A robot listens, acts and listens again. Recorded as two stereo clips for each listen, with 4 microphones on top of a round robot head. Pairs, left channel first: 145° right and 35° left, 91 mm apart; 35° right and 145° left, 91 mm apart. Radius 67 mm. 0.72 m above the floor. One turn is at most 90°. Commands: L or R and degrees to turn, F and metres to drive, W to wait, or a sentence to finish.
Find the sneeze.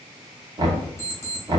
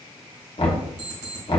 W
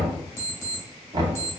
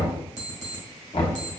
W
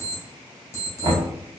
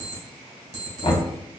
I can't make out a sneeze, only an alarm clock and knocking.